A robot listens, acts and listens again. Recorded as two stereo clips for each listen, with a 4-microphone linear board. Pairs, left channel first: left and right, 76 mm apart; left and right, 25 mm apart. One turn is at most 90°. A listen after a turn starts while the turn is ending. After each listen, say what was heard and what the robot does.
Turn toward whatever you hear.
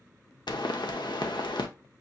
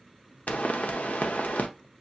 The pop: about 70° left or 110° left. Turn 70° left.
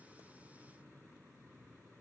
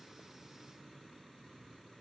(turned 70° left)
Keep listening.
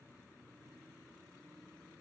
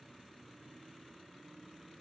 I heard a pop, but can't make it out now. It was about straight ahead or 40° left.